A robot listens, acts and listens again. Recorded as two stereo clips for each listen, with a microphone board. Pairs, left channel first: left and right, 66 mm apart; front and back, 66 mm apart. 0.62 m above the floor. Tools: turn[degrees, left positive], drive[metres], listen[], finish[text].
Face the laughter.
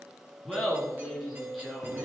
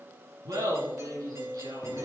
Thought: The laughter: 175° right.
Action: turn[-175]
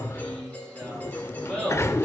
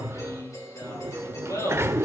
Thought: The laughter is now 10° left.
Action: turn[10]
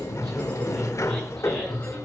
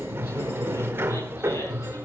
Action: listen[]
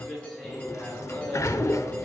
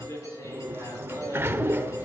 Action: finish[Facing the laughter, over 4 m away.]